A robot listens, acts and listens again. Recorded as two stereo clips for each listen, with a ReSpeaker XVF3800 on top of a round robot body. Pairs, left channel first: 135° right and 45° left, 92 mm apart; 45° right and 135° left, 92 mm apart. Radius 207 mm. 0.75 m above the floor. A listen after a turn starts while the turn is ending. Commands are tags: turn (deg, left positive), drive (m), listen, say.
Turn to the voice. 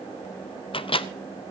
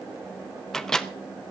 <listen/>
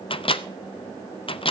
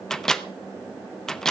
<listen/>
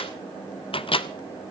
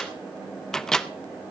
<say>I can't make out anyone speaking to turn to.</say>